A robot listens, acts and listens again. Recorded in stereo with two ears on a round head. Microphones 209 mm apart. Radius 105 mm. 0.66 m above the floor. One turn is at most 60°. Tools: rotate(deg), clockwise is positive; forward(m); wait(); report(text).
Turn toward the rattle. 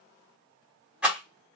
rotate(30)
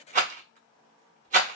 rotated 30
rotate(60)
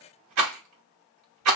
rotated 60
rotate(60)
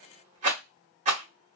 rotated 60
rotate(35)
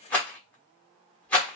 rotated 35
report("Found it: a rattle, straight ahead, 1 to 2 m away.")